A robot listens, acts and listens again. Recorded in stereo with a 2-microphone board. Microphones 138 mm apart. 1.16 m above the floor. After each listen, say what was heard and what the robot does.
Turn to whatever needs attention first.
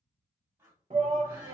The shout: about 55° right or 125° right. Turn 55° right.
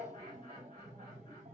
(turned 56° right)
So it is at 60° right. Turn 60° right.
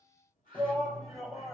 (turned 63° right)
Found it: a shout, straight ahead.